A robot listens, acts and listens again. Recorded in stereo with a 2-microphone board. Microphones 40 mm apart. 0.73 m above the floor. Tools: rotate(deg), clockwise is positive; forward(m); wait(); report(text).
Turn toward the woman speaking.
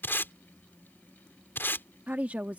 rotate(40)
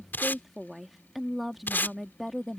report("Found it: a woman speaking, straight ahead.")